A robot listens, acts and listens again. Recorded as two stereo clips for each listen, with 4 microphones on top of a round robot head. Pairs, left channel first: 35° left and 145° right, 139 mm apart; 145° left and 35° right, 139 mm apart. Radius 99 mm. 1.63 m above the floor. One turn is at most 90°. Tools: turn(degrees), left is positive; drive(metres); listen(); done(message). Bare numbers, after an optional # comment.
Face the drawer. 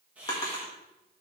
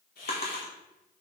# The drawer: 100° left.
turn(90)
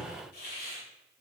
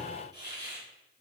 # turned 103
listen()
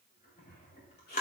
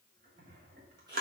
done("Facing the drawer.")